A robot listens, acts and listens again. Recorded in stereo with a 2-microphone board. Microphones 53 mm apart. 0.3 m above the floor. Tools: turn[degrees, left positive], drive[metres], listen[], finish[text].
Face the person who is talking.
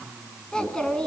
Thought: The child speaking: about 15° left or 165° left.
Action: turn[15]
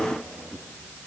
Thought: So it is at 150° left.
Action: turn[150]
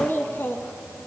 Thought: The child speaking is now 50° left.
Action: turn[50]
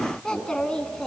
Thought: The child speaking is now 15° left.
Action: turn[15]
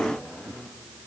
Action: listen[]
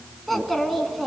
Action: finish[Facing the child speaking, 2 to 4 m away.]